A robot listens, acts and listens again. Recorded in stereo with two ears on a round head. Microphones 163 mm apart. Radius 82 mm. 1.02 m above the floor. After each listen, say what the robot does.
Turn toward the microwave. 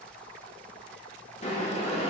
Keep listening.
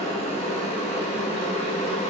Keep listening.
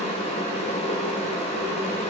I can't make out a microwave, only boiling.